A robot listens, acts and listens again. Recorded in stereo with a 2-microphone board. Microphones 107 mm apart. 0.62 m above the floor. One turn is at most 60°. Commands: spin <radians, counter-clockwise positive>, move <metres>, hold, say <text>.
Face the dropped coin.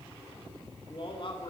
hold
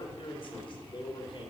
hold
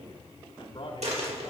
spin -1.05
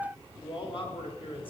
spin -0.52
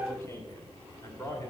say Facing where the dropped coin came from. I can't hear it now.